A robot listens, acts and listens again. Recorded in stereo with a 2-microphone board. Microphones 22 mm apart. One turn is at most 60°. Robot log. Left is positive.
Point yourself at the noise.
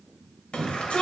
note: The shout: about 70° left or 110° left.
cmd yaw +60
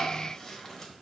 cmd idle
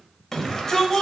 note: So it is at 20° left.
cmd yaw +20
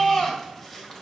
end: Found it: a shout, straight ahead, 2 to 4 m away.